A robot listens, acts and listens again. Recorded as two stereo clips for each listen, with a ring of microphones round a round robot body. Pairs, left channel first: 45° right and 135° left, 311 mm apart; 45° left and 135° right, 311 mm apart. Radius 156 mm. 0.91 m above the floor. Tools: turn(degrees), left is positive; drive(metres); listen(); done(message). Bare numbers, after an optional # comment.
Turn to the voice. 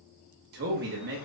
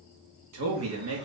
# The man speaking: 170° right.
turn(-170)
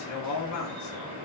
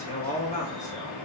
# The man speaking is now 20° right.
turn(-20)
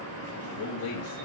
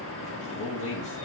done("Facing the man speaking.")